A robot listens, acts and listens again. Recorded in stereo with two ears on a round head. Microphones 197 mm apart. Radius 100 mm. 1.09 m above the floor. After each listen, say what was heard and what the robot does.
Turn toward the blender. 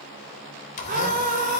The blender: about 35° left or 145° left. Turn 35° left.
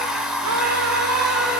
Found it: a blender, straight ahead.